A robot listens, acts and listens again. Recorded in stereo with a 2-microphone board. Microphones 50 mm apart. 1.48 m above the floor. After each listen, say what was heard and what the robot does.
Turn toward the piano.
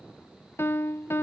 The piano: about 50° left or 130° left. Turn 50° left.
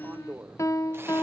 So it is at 80° left. Turn 80° left.
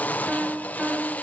The piano is now 10° right. Turn 10° right.
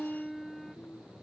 Found it: a piano, straight ahead, under 1 m away.